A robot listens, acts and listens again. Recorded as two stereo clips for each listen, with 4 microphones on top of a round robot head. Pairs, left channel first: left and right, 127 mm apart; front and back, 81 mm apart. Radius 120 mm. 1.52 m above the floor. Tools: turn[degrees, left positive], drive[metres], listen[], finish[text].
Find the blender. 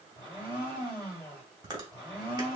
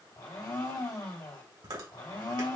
Thought: The blender: 30° left.
Action: turn[30]
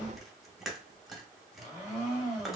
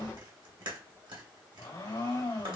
Action: finish[Found it: a blender, straight ahead.]